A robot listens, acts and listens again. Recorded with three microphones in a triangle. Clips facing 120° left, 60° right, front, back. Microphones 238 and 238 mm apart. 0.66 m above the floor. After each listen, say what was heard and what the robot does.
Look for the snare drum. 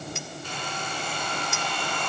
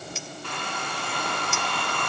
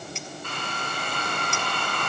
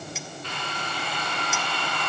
Keep listening.
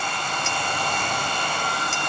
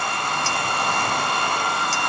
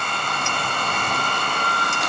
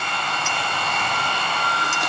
Keep listening.
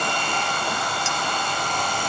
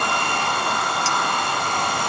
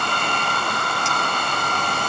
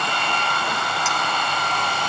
I can't make out a snare drum, only a hair dryer.